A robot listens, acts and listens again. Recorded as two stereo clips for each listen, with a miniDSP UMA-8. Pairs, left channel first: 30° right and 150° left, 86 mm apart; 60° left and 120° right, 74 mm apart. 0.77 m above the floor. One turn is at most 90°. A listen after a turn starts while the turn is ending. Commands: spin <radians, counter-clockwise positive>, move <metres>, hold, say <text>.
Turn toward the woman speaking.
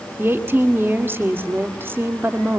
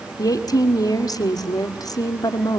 spin 1.48
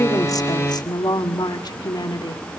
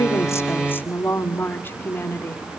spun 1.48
say Found it: a woman speaking, straight ahead, 1 to 2 m away.